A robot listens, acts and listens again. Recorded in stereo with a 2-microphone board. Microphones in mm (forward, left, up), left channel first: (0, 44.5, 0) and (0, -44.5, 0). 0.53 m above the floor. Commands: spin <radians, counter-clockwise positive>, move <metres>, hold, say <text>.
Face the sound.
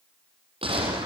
spin -1.57
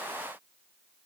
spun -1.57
say I heard a gunshot from this way, but can't make it out now.